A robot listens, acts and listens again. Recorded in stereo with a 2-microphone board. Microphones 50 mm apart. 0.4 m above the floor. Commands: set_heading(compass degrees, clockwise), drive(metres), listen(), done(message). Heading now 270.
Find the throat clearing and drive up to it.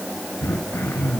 set_heading(195)
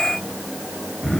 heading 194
drive(1.0)
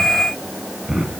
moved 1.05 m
set_heading(204)
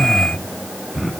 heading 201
drive(1.0)
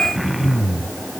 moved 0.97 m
drive(1.0)
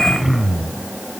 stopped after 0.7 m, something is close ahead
done("I am next to the throat clearing.")